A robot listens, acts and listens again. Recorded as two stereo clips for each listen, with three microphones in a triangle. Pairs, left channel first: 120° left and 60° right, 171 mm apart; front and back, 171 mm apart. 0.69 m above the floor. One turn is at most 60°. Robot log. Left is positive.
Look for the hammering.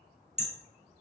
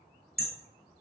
note: The hammering: 15° right.
cmd yaw -15
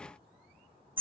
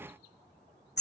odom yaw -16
end: Found it: hammering, straight ahead, under 1 m away.